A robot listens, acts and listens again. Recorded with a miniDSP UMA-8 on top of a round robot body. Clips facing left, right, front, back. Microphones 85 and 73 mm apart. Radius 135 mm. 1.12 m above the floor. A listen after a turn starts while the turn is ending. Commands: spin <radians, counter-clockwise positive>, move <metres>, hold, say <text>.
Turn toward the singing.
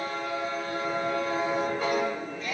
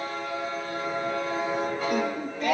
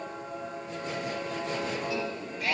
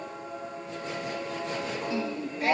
spin -2.01
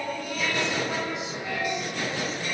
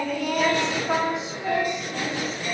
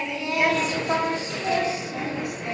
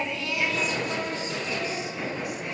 spin -0.61
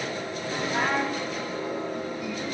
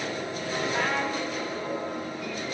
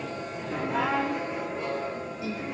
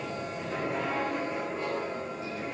hold
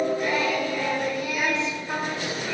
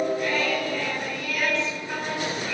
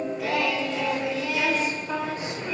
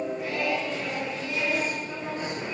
spin 0.35
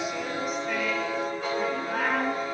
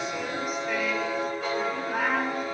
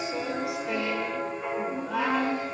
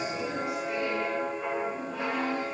say Found it: singing, straight ahead, over 4 m away.